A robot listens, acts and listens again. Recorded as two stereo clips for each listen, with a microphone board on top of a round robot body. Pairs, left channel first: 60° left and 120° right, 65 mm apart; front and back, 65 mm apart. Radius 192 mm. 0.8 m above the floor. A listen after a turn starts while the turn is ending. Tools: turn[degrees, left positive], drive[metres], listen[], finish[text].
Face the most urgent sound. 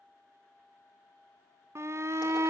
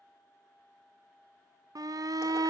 Thought: The shout: 160° right.
Action: turn[-160]
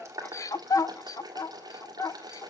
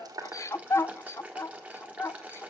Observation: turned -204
Thought: The shout is now 45° left.
Action: turn[45]
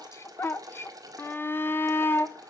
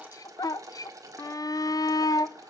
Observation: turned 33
Thought: The shout is now 10° left.
Action: turn[10]
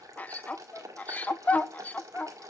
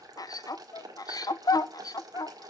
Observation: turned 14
Action: finish[Facing the shout.]